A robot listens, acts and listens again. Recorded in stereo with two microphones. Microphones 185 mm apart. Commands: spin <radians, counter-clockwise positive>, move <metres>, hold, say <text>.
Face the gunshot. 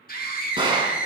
spin -0.44
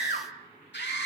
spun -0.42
hold
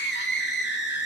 say I heard a gunshot, but can't make it out now. It was about straight ahead or 130° right.